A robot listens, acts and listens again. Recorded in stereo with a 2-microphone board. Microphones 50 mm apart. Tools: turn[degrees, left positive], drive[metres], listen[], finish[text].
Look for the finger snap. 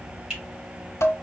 Thought: The finger snap: about 20° right or 160° right.
Action: turn[-20]
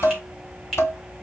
Action: finish[Facing the finger snap, 2 to 4 m away.]